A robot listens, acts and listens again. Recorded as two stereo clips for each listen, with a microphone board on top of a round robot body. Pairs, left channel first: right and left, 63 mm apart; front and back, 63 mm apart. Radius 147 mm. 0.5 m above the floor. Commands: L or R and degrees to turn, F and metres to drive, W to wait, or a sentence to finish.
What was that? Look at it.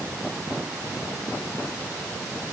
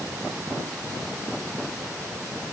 W
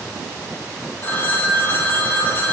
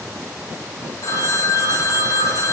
R30
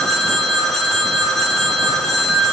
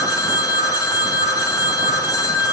Facing the phone ringing, 2 to 4 m away.